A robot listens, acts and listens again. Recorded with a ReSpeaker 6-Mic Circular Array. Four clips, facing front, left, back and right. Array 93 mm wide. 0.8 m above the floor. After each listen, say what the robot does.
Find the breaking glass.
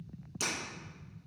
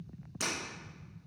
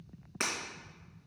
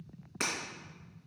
Turn 150° right.
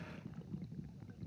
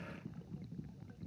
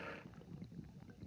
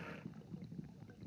I heard breaking glass from this way, but can't make it out now.